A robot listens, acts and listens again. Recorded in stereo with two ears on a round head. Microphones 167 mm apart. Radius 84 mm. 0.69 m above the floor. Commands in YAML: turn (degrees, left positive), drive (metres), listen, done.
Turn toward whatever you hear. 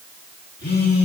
turn: 60
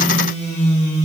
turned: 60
turn: 40
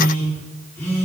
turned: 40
turn: 15
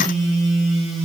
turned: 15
done: "Found it: a phone buzzing, straight ahead, 1 to 2 m away."